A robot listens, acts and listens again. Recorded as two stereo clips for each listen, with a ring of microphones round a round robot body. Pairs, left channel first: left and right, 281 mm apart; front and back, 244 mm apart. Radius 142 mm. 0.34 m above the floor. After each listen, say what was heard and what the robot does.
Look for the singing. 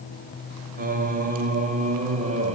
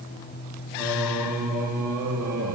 The singing: 160° right. Turn 160° right.
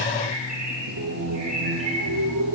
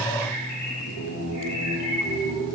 The singing is now 50° right. Turn 50° right.
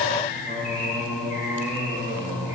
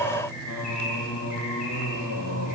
Facing the singing.